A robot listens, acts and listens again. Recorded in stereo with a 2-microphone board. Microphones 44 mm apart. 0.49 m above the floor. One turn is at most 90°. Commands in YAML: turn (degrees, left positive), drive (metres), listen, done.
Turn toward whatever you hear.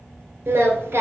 turn: -55
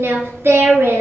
turn: -85
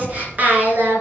turn: -50
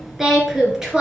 turn: -20
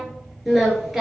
turn: -10
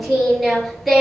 done: "Facing the singing, 2 to 4 m away."